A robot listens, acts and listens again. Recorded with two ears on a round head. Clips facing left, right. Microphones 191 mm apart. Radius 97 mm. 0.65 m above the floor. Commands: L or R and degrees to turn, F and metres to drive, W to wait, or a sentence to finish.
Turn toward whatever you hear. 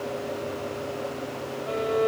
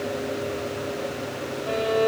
R45
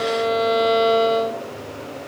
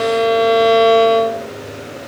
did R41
R90
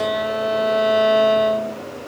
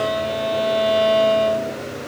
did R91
Facing the violin, 1 to 2 m away.